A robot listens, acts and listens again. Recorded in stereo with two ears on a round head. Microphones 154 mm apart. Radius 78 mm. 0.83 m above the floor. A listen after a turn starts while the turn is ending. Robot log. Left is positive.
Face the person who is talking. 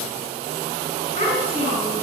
note: The child speaking: about 40° left or 140° left.
cmd yaw +40
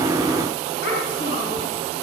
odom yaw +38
note: So it is at 105° left.
cmd yaw +105
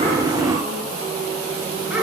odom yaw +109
end: Found it: a child speaking, straight ahead, over 4 m away.